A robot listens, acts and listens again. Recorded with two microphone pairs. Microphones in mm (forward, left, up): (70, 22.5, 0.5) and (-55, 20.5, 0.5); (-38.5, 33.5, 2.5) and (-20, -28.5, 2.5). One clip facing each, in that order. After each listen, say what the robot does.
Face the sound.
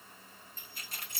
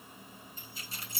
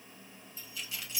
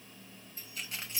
Turn 20° right.
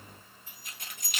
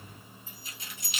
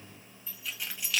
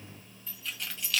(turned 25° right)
Turn 35° left.
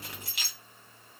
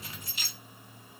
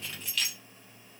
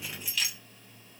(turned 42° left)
Turn 10° left.
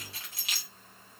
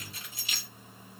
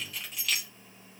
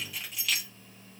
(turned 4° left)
Turn 15° left.
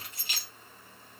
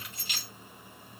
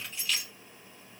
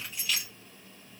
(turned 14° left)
Turn 10° left.
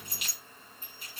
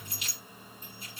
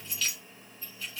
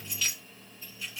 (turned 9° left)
Found it: keys jangling, straight ahead, 2 to 4 m away.